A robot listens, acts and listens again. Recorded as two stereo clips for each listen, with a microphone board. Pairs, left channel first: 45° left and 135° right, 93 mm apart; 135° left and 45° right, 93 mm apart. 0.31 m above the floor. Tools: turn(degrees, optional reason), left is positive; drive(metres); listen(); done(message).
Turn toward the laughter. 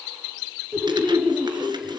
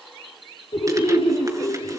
turn(degrees=140, reason="The laughter: 140° left.")
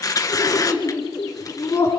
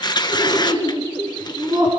turn(degrees=-15, reason="The laughter is now 15° right.")
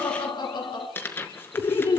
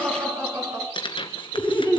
turn(degrees=10, reason="The laughter is now 10° left.")
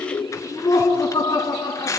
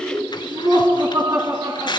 done("Found it: laughter, straight ahead.")